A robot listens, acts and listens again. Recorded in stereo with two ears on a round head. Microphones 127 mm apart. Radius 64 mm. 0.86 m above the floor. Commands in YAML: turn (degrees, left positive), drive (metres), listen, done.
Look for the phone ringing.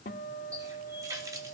listen: true
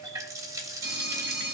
turn: -90
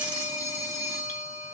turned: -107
turn: 25
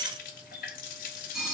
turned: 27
done: "Found it: a phone ringing, straight ahead, over 4 m away."